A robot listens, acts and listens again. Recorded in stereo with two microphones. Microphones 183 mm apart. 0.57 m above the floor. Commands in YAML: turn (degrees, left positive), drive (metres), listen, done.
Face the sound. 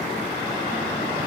listen: true
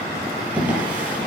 turn: -30
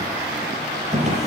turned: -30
turn: -140
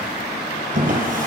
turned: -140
turn: -50
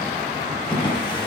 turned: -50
turn: 25
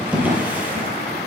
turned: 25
turn: -10
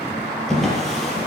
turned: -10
done: "Facing the drawer, over 4 m away."